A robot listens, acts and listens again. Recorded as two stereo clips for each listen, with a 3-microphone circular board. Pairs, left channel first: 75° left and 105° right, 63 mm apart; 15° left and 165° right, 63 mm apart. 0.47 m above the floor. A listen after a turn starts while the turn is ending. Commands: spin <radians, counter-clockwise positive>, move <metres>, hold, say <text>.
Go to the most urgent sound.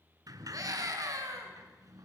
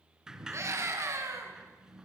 spin -2.18
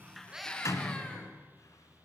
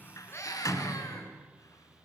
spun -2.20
move 1.0
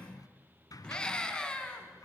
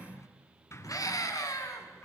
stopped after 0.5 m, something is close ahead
say Blocked. The scream is further on, straight ahead.